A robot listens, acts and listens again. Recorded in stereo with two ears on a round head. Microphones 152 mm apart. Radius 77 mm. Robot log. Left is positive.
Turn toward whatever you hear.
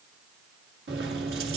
note: The keys jangling: about 60° right or 120° right.
cmd yaw -60
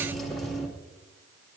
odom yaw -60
end: Facing the keys jangling, 1 to 2 m away.